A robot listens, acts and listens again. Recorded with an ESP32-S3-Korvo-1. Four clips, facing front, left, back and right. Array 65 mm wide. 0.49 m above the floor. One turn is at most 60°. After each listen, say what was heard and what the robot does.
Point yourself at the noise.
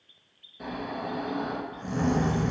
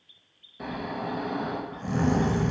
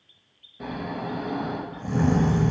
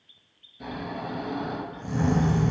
The snoring: 100° left. Turn 60° left.
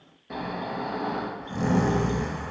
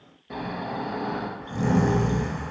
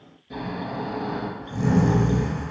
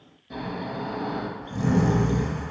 The snoring is now 40° left. Turn 40° left.
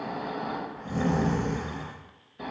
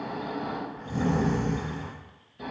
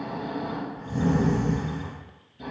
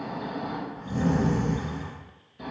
Found it: snoring, straight ahead, under 1 m away.